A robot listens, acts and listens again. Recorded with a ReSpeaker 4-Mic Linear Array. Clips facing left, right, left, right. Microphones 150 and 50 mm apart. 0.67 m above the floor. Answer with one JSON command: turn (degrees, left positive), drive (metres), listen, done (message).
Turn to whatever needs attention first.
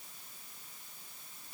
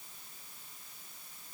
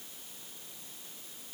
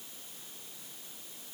{"listen": true}
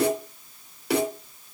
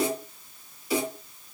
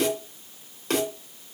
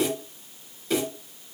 {"listen": true}
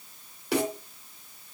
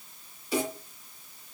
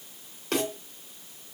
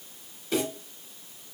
{"done": "I can't make out anything urgent to turn to."}